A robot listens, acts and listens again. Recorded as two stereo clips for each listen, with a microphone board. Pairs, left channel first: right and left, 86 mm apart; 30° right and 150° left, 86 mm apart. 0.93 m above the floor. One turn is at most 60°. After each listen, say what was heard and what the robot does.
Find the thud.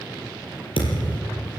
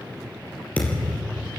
The thud: 105° right. Turn 60° right.
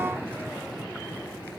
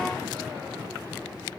Nothing new. It was at 45° right. Turn 45° right.
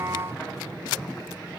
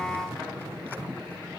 I heard a thud from this way, but can't make it out now.